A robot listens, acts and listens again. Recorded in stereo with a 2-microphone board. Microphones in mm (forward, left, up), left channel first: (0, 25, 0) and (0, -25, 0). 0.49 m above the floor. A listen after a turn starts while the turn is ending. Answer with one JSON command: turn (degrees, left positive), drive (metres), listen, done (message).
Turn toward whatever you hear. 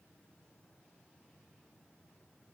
{"listen": true}
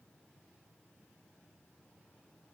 {"listen": true}
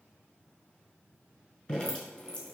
{"turn": 25}
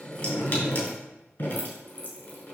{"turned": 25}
{"turn": 130}
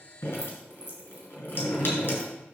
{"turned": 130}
{"turn": 45}
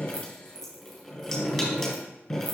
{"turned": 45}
{"done": "Found it: dripping, straight ahead, 2 to 4 m away."}